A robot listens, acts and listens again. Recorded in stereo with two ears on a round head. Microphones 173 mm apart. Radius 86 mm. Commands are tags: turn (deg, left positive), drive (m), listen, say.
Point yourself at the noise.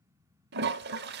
<turn deg="-60"/>
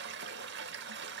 <turn deg="-60"/>
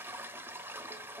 <turn deg="-10"/>
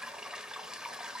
<say>Facing the toilet flushing, under 1 m away.</say>